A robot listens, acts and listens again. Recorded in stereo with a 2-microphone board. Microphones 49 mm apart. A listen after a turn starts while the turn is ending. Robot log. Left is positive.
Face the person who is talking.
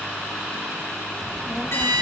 cmd yaw -30
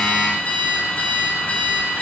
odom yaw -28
cmd idle
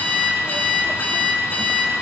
cmd idle
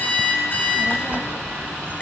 note: So it is at 135° right.
cmd yaw -135
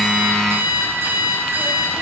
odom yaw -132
cmd idle
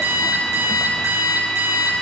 cmd idle
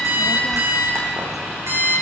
end: Facing the child speaking.